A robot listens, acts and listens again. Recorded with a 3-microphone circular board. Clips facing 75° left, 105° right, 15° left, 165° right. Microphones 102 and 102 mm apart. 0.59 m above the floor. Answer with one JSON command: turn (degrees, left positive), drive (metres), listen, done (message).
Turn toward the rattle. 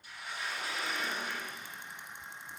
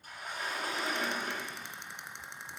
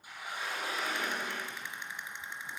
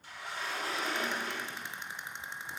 {"turn": -110}
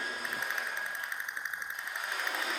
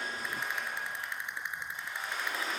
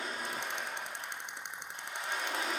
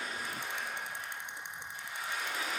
{"done": "Facing the rattle."}